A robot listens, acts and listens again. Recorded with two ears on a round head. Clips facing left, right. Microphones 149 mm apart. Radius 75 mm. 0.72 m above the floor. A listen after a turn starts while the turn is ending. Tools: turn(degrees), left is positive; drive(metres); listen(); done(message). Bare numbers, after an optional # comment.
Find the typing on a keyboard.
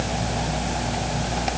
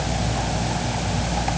listen()
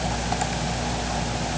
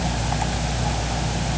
listen()
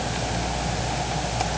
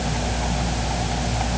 done("I can't make out typing on a keyboard to turn to.")